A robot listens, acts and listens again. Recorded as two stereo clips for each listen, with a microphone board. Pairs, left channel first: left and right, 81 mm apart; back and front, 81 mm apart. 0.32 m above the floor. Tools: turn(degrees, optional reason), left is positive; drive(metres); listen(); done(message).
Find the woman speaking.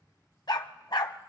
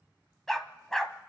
listen()
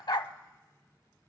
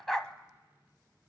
listen()
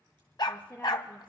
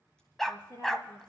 turn(degrees=160, reason="The woman speaking: 160° left.")
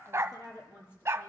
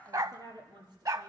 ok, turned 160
turn(degrees=30, reason="The woman speaking is now 30° left.")
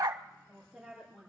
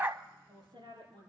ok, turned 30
done("Found it: a woman speaking, straight ahead.")